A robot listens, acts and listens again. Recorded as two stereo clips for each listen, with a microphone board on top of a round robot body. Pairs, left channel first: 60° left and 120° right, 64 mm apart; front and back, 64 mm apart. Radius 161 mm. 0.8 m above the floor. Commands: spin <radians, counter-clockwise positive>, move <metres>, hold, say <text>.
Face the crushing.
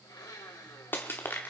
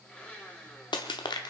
say Found it: crushing, straight ahead, under 1 m away.